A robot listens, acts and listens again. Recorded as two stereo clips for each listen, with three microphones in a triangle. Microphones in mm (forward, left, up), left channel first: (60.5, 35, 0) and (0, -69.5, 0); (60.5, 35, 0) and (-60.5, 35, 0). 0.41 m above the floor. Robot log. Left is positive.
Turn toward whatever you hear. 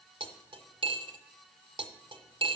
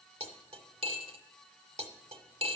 note: The cutlery clinking: 160° right.
cmd yaw -160
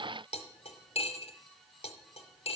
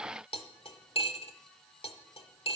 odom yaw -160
note: The cutlery clinking is now 30° left.
cmd yaw +30
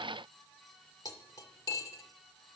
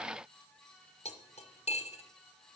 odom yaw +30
end: Facing the cutlery clinking, under 1 m away.